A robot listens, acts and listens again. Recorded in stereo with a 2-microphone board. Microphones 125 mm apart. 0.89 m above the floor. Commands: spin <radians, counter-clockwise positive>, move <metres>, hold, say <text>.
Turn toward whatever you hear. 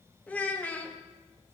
spin 0.52
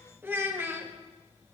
spin -0.26
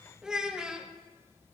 say Found it: a child speaking, straight ahead, under 1 m away.